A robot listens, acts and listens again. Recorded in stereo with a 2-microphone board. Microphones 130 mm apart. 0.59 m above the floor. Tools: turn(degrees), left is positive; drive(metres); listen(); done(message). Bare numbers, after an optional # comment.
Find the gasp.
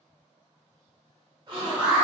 # The gasp: about 35° right or 145° right.
turn(-35)
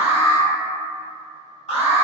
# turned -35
listen()
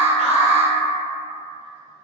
done("I heard a gasp, but can't make it out now. It was about straight ahead or 110° right.")